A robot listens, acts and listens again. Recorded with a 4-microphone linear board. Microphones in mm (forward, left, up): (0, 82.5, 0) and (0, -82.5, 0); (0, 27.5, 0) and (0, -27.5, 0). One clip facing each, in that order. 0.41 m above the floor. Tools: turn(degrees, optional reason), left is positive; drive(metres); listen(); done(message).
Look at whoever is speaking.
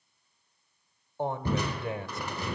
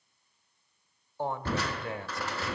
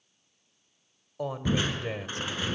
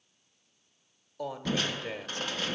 turn(degrees=20, reason="The woman speaking: about 20° left or 160° left.")
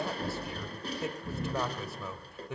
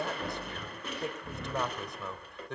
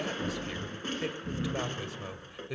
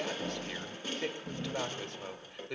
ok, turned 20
done("Facing the woman speaking.")